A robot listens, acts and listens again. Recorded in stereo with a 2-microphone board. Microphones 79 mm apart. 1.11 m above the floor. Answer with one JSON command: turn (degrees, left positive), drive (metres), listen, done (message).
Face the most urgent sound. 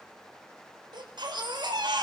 {"turn": -70}
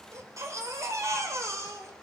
{"turn": -40}
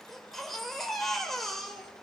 {"done": "Facing the baby crying, 2 to 4 m away."}